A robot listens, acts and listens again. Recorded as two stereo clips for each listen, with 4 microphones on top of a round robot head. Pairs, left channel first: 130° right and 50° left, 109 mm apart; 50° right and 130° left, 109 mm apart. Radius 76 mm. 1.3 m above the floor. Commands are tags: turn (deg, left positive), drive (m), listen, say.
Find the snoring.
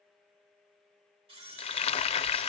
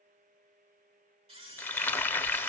<listen/>
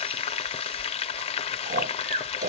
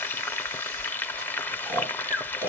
<turn deg="60"/>
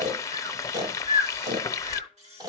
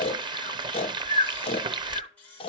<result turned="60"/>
<turn deg="-10"/>
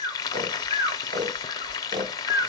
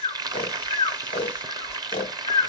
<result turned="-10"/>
<say>Facing the snoring, 1 to 2 m away.</say>